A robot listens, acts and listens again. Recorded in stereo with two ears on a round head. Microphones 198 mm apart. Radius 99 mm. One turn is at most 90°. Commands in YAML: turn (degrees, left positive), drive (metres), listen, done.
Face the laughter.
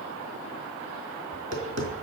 listen: true
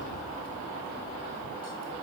listen: true
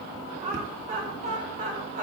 turn: -35
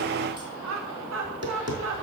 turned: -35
turn: -90
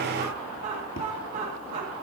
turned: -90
turn: -30
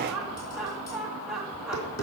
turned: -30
done: "Facing the laughter."